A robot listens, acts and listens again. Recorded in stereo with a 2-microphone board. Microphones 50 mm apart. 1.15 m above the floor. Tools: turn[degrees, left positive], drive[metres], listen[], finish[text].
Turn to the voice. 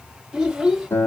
Action: turn[-30]
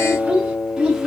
Action: turn[-30]
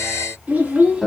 Thought: So it is at 160° right.
Action: turn[-160]
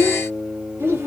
Thought: The child speaking is now 65° right.
Action: turn[-65]
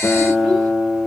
Action: listen[]
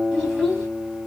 Thought: The child speaking is now 10° right.
Action: turn[-10]
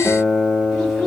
Action: finish[Found it: a child speaking, straight ahead, 2 to 4 m away.]